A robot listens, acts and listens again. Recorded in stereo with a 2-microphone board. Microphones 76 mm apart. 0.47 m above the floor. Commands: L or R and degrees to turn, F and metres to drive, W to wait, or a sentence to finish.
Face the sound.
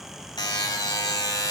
L65
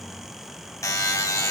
L45
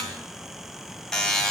Found it: a buzzer, straight ahead, 2 to 4 m away.